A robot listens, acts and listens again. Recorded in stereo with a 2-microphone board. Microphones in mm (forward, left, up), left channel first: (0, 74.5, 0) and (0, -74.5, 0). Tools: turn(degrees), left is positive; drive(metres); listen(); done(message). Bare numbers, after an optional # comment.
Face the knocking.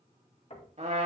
# The knocking: about 45° left or 135° left.
turn(45)
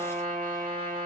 listen()
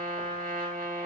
listen()
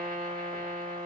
done("I heard knocking, but can't make it out now. It was about straight ahead or 90° left.")